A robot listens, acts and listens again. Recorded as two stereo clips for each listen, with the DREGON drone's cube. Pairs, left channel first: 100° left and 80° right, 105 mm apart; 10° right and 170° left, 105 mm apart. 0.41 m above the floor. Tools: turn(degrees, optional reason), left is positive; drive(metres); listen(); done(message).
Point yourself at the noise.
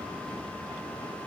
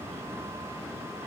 listen()
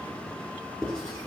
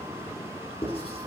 turn(degrees=15, reason="The writing: 15° left.")
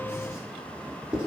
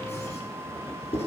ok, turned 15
done("Facing the writing, over 4 m away.")